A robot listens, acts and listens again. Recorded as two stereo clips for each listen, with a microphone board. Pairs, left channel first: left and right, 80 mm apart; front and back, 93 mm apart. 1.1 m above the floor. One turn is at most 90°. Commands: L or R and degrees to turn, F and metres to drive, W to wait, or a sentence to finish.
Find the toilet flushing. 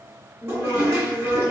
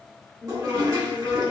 R90
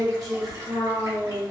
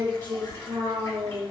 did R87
R55
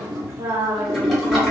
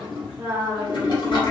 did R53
Found it: a toilet flushing, straight ahead.